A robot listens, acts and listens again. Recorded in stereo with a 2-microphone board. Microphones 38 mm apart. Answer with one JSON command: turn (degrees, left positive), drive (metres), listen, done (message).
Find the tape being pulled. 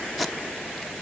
{"turn": -30}
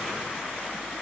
{"listen": true}
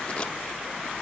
{"listen": true}
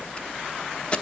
{"turn": 25}
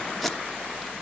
{"done": "Facing the tape being pulled."}